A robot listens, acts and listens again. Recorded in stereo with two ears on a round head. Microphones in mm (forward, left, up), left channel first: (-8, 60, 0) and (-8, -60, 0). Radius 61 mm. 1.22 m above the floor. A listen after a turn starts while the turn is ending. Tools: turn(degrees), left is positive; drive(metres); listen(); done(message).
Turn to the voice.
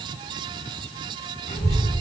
turn(degrees=50)
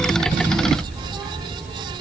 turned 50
done("Facing the child speaking, 2 to 4 m away.")